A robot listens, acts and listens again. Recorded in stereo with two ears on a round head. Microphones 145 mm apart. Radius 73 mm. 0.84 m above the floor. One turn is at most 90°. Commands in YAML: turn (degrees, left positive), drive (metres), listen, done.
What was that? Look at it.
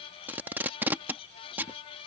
turn: -30
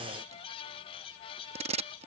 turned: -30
turn: -90
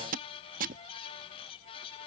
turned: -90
turn: -55
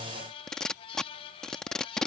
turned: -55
done: "Found it: tape being pulled, straight ahead."